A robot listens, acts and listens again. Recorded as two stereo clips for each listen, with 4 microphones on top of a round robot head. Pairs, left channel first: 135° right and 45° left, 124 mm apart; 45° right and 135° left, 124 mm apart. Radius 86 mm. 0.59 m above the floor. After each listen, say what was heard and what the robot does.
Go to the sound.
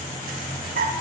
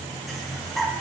The breathing: 50° left. Turn 50° left.
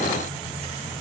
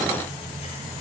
Keep listening.
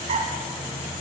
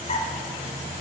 Keep listening.
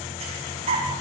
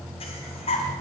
Drive 1.0 m forward.
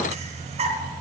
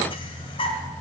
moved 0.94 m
Drive 1.0 m forward.
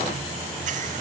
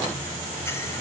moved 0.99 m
Keep listening.
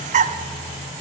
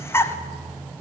The breathing is now 30° left. Turn 30° left.
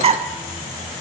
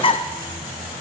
Drive 1.0 m forward.
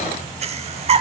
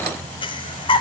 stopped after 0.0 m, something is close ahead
Arrived at the breathing, straight ahead.